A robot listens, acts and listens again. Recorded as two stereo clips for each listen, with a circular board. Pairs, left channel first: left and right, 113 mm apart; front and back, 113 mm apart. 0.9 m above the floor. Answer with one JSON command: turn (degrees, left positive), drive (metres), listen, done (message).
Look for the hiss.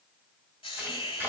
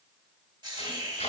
{"turn": 130}
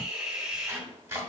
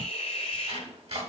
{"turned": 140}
{"turn": -10}
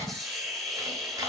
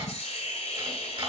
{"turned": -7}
{"done": "Found it: a hiss, straight ahead, 1 to 2 m away."}